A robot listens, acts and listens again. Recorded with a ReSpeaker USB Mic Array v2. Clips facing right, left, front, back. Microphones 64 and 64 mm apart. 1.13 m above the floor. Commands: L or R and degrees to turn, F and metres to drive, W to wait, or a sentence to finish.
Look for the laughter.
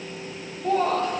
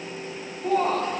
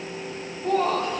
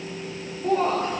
L130
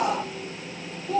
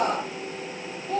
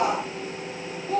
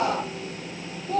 R25
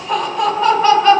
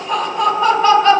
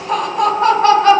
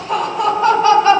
Facing the laughter, 1 to 2 m away.